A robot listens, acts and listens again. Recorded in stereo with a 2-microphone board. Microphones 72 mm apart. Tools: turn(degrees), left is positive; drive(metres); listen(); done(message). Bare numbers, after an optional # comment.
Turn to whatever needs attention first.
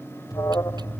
# The alarm: about 60° left or 120° left.
turn(60)
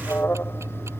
# So it is at 40° left.
turn(40)
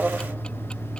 # The alarm is now 15° right.
turn(-15)
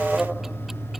done("Found it: an alarm, straight ahead.")